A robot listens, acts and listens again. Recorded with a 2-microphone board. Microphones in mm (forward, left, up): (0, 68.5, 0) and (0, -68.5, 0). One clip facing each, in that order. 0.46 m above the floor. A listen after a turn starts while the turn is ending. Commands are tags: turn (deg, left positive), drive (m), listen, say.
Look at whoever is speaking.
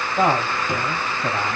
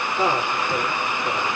<turn deg="55"/>
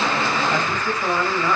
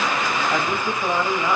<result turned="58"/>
<turn deg="-10"/>
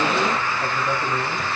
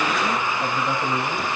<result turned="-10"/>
<turn deg="-10"/>
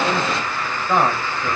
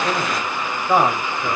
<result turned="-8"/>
<turn deg="-10"/>
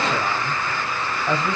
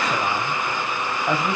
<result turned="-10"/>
<turn deg="-10"/>
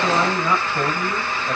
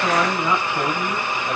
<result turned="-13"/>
<say>Found it: a man speaking, straight ahead.</say>